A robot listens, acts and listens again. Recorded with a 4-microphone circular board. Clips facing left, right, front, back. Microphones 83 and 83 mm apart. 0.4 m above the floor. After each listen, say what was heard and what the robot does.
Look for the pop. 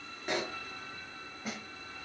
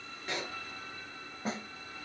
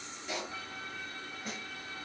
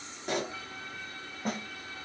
The pop: 160° left. Turn 160° left.
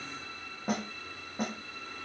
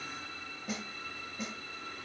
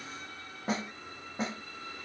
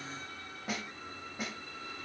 I heard a pop from this way, but can't make it out now.